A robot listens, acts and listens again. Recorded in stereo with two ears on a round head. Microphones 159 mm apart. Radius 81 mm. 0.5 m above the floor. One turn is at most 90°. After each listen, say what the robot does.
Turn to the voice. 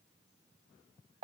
Keep listening.
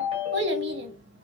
Turn 65° right.
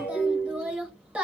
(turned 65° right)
Facing the child speaking, 1 to 2 m away.